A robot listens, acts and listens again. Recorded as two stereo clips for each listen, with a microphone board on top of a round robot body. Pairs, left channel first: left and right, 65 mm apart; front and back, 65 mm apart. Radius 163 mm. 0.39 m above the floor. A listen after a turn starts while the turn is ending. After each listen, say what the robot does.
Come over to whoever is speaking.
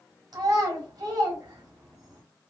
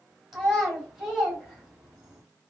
Turn 100° right.
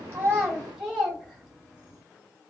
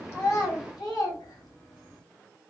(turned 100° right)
Turn 10° right.
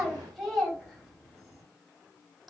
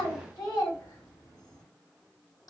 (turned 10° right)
Drive 1.0 m forward.
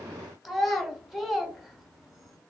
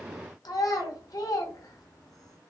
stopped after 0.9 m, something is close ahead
I am next to the child speaking.